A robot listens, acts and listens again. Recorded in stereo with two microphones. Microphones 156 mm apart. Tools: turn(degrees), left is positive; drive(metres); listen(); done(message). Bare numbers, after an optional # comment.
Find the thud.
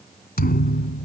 turn(90)
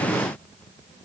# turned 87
done("Facing where the thud came from. I can't hear it now.")